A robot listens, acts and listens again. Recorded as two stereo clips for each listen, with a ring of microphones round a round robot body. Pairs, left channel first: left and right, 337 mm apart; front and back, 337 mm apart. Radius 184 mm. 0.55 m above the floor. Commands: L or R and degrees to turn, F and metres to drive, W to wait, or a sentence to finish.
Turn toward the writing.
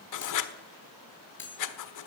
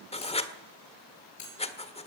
L70
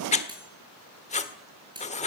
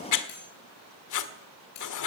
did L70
L20
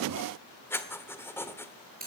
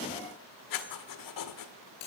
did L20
Found it: writing, straight ahead.